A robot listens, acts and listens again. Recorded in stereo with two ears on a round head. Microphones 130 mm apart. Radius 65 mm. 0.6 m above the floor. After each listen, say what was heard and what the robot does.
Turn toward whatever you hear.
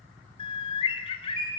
The bird: about 40° left or 140° left. Turn 40° left.
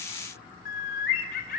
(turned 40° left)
So it is at 100° left. Turn 100° left.
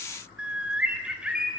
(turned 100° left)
Found it: a bird, straight ahead, 2 to 4 m away.